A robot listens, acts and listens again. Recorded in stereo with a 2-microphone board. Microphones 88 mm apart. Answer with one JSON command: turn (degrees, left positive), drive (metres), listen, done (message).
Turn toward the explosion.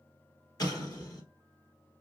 {"turn": 50}
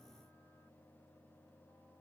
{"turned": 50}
{"listen": true}
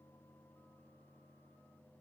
{"done": "I heard an explosion, but can't make it out now. It was about straight ahead or 80° left."}